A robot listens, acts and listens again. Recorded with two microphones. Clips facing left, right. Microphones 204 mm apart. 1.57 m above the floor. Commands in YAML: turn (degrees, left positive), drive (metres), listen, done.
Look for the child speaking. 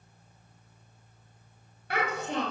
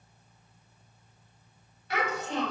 turn: 50
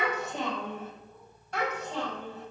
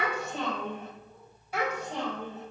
turn: -20
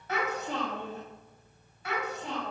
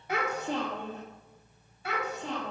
turn: -25
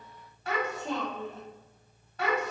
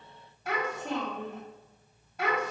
done: "Facing the child speaking."